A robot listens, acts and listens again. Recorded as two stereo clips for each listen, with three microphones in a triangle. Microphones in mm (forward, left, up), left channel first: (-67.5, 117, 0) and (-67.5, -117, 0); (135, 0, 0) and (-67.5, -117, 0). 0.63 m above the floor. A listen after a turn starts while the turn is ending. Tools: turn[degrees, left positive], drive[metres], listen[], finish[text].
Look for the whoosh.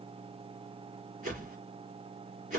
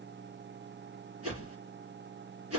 Thought: The whoosh: 150° right.
Action: turn[-150]
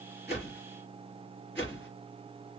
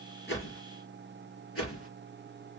Action: finish[Facing the whoosh.]